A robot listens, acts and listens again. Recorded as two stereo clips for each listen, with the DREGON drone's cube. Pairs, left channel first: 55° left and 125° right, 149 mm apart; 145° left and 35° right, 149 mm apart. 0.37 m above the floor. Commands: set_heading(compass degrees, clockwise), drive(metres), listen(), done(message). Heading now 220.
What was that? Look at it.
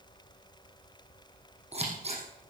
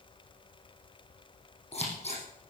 set_heading(30)
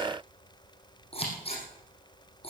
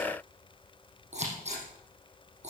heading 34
done("Facing the scissors, over 4 m away.")